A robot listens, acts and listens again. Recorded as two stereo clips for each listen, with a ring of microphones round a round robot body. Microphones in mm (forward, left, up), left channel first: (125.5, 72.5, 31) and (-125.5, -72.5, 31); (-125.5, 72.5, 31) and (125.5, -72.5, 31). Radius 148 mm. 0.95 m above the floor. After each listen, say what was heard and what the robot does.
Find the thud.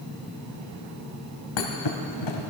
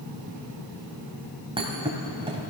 The thud: 45° left. Turn 45° left.
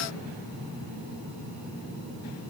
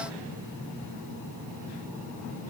I heard a thud from this way, but can't make it out now.